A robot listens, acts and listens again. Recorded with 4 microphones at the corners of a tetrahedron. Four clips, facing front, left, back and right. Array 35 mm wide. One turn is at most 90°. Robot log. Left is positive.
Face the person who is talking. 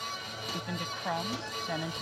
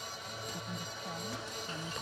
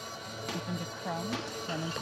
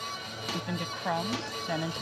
note: The woman speaking: 60° right.
cmd yaw -60
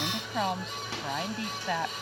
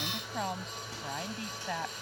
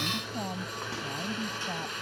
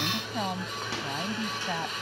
end: Facing the woman speaking.